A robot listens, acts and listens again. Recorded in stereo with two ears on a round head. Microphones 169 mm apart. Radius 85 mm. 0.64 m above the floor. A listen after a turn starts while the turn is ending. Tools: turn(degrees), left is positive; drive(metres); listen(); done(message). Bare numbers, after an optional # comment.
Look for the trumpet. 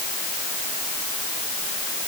listen()
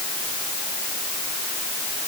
listen()
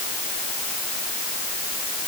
done("I can't make out a trumpet to turn to.")